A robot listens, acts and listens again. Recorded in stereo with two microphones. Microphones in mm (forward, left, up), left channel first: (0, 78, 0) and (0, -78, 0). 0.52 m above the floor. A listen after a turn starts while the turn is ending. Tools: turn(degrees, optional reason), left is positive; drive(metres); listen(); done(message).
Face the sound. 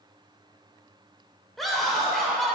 turn(degrees=30)
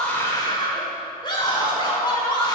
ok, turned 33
turn(degrees=145, reason="So it is at 145° left.")
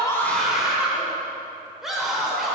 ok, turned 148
done("Facing the scream, 1 to 2 m away.")